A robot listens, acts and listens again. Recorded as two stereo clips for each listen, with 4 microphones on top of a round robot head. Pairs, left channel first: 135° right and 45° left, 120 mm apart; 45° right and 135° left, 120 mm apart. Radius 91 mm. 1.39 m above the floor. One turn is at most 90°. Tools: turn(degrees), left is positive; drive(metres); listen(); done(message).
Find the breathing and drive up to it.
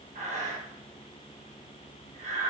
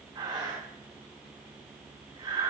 turn(degrees=75)
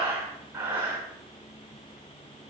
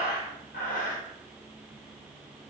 turn(degrees=-30)
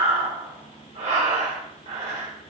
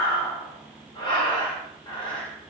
turn(degrees=10)
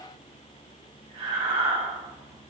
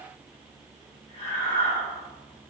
drive(metres=1.0)
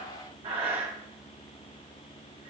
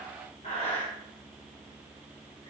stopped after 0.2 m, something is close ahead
done("Something is in my way. I am facing the breathing but have not reached it.")